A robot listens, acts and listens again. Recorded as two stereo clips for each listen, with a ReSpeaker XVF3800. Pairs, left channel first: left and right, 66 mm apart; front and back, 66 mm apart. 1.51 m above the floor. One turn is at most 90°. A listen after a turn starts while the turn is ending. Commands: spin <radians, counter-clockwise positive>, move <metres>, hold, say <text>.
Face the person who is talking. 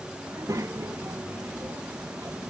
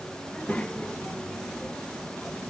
spin -1.22
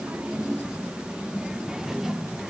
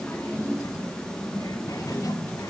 say Facing the child speaking, 1 to 2 m away.